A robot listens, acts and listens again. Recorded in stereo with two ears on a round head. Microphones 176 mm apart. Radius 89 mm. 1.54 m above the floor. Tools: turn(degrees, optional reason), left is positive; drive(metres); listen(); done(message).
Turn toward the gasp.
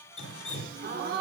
turn(degrees=-45, reason="The gasp: about 45° right or 135° right.")
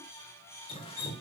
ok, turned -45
listen()
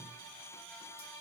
done("I heard a gasp, but can't make it out now. It was about straight ahead or 90° right.")